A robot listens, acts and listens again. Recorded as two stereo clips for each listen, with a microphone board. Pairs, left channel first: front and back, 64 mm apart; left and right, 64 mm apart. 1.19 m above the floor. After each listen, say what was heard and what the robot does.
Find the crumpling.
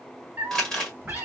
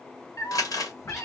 The crumpling: 80° left. Turn 80° left.
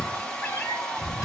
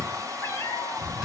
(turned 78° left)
Keep listening.
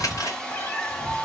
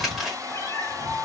Keep listening.
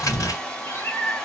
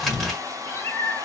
I heard crumpling from this way, but can't make it out now.